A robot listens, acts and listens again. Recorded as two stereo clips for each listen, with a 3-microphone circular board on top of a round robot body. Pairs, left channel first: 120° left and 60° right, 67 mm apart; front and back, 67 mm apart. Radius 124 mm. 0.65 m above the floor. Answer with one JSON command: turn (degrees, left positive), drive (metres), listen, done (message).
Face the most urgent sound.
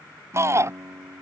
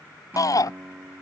{"turn": -20}
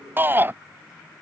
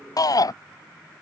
{"done": "Facing the shout."}